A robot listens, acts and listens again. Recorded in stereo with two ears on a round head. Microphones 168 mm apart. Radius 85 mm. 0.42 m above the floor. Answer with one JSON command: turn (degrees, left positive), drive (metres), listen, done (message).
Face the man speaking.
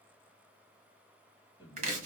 {"turn": -30}
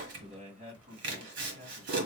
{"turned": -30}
{"turn": -135}
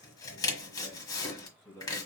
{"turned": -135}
{"done": "Found it: a man speaking, straight ahead, over 4 m away."}